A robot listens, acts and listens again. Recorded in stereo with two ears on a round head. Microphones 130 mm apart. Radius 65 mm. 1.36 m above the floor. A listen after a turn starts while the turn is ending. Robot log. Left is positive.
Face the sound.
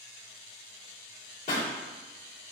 note: The pop: about 60° left or 120° left.
cmd yaw +60
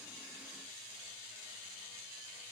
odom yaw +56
cmd idle
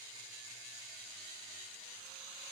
end: I heard a pop, but can't make it out now. It was about 5° left or 65° left.